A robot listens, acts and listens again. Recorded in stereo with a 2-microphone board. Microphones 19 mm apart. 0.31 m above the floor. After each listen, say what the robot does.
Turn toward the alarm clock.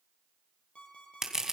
Turn 90° left.
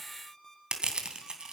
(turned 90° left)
Turn 10° left.
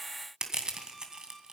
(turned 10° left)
Keep listening.
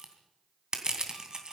Keep listening.
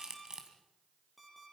Found it: an alarm clock, straight ahead.